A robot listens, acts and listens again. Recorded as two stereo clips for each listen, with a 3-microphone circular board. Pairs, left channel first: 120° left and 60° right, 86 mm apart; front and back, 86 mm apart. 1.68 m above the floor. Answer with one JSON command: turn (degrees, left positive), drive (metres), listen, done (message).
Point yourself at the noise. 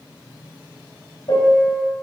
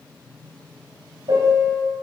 {"turn": 150}
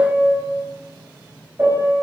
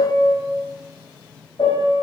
{"done": "Facing the piano."}